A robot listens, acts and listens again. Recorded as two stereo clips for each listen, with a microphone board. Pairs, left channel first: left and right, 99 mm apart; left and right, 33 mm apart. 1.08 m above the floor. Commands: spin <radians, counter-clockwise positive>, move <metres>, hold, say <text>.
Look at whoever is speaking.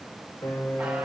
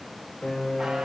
hold
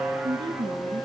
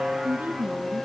spin -0.96
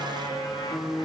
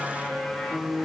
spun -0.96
hold
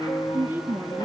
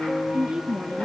spin -0.44
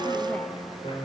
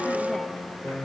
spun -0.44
hold
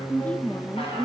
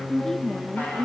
spin 0.26
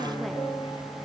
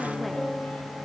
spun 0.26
hold
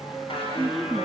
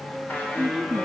say Found it: a woman speaking, straight ahead.